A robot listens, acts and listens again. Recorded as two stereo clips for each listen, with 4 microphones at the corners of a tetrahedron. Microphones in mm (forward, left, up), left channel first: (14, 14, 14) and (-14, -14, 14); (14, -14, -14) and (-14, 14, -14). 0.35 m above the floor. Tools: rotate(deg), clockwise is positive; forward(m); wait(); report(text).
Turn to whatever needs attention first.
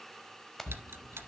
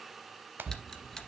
rotate(-75)
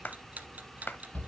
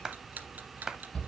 rotate(-15)
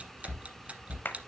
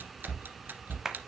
report("Facing the shout.")